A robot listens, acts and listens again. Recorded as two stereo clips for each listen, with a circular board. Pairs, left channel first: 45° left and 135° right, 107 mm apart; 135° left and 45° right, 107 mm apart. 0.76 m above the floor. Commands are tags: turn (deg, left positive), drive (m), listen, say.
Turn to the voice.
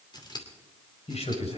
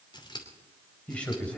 <turn deg="55"/>
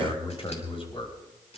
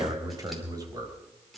<turn deg="10"/>
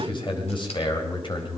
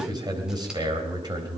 <say>Facing the man speaking.</say>